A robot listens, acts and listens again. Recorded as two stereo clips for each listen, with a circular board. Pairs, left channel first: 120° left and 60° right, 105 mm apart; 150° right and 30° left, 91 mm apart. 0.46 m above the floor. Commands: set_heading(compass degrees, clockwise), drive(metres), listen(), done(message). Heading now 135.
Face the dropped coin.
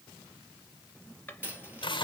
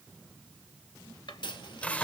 set_heading(270)
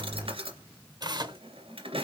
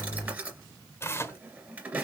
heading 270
done("I heard a dropped coin from this way, but can't make it out now.")